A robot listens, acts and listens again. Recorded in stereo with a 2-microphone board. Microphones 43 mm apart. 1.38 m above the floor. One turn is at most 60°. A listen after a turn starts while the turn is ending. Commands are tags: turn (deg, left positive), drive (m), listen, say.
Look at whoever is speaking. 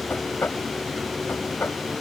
<listen/>
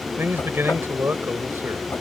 <turn deg="-60"/>
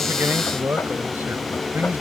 <turn deg="-50"/>
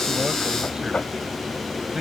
<turn deg="-20"/>
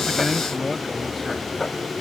<say>Found it: a man speaking, straight ahead.</say>